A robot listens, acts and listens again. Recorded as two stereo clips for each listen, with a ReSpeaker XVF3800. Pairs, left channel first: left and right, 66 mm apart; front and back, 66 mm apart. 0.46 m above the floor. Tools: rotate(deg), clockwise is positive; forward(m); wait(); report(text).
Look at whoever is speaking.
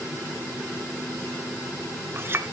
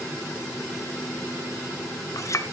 wait()
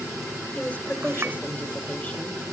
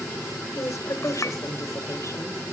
rotate(-25)
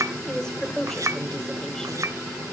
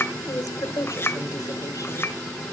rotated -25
rotate(-10)
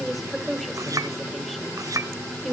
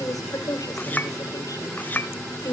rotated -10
report("Found it: a woman speaking, straight ahead.")